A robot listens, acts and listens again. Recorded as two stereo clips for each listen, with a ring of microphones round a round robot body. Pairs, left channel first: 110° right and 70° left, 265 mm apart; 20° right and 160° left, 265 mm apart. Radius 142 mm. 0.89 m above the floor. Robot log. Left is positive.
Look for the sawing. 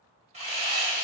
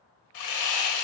end: Facing the sawing, under 1 m away.